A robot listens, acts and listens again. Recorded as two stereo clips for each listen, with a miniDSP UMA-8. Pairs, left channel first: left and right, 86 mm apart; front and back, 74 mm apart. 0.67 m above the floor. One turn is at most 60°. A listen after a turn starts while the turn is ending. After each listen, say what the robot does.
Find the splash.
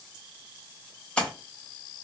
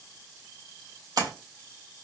Turn 60° left.
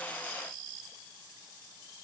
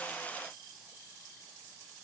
Turn 60° left.
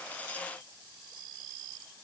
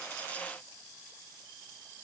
Turn 45° left.
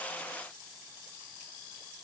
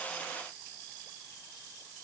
Facing where the splash came from. I can't hear it now.